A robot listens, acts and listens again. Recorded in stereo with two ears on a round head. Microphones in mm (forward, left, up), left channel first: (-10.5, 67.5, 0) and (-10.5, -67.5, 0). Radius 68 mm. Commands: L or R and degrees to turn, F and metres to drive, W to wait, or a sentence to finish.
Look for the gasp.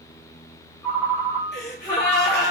L70
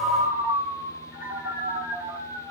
W
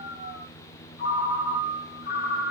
I heard a gasp, but can't make it out now. It was about straight ahead or 40° left.